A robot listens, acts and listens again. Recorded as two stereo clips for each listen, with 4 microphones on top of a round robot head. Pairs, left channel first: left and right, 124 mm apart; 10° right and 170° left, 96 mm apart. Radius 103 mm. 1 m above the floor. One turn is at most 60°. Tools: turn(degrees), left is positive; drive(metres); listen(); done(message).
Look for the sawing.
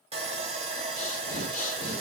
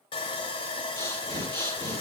turn(degrees=-45)
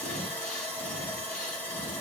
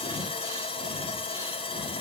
turn(degrees=15)
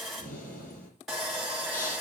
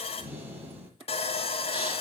done("Facing the sawing, 2 to 4 m away.")